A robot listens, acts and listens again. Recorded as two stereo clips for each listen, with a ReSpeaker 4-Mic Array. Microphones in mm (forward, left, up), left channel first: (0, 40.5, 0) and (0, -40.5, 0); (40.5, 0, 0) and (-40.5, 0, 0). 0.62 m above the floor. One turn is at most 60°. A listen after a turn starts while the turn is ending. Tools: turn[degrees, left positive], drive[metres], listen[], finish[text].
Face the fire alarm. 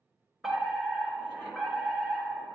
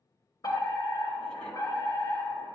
Action: finish[Found it: a fire alarm, straight ahead.]